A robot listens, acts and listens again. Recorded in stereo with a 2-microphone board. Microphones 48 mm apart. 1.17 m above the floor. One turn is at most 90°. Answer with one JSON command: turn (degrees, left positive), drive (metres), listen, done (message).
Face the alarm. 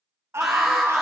{"turn": 30}
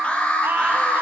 {"turn": 90}
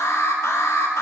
{"turn": 90}
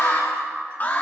{"turn": 35}
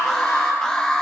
{"turn": 10}
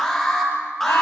{"done": "Found it: an alarm, straight ahead."}